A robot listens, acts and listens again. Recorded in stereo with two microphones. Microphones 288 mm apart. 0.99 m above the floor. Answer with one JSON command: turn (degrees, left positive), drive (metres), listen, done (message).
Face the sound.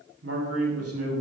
{"turn": -50}
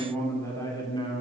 {"turn": 20}
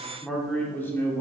{"turn": 10}
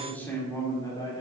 {"turn": 15}
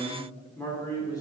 {"turn": 10}
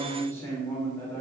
{"turn": 10}
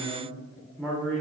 {"done": "Found it: a man speaking, straight ahead, 2 to 4 m away."}